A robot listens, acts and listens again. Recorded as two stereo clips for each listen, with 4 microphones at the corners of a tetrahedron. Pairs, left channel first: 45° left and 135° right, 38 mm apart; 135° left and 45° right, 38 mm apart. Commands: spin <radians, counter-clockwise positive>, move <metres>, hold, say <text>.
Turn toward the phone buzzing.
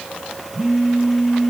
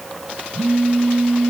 spin -1.57
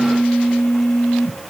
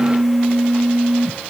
spin 0.52
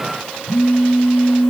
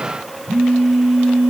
spin 0.26
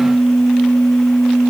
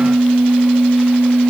say Found it: a phone buzzing, straight ahead, 2 to 4 m away.